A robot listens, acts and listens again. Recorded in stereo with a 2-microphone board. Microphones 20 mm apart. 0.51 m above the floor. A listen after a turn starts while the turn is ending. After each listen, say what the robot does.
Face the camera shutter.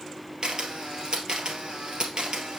Turn 50° right.
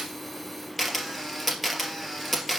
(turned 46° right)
Found it: a camera shutter, straight ahead.